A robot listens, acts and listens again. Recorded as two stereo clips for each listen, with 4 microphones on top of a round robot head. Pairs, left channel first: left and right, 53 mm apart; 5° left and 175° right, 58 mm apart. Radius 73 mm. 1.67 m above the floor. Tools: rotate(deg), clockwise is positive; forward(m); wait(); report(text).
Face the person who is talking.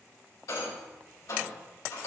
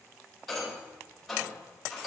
wait()
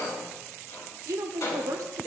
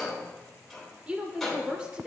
rotate(105)
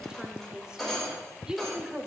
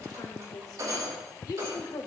rotate(15)
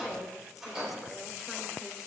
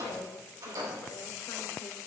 wait()
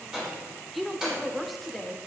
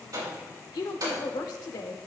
report("Facing the woman speaking, under 1 m away.")